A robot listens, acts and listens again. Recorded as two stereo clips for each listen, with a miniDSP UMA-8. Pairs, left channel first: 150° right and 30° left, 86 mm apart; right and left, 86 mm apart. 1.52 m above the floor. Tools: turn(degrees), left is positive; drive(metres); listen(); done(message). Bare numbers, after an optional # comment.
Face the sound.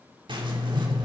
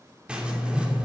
# The writing: 15° left.
turn(15)
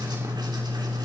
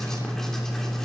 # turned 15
done("Found it: writing, straight ahead, 2 to 4 m away.")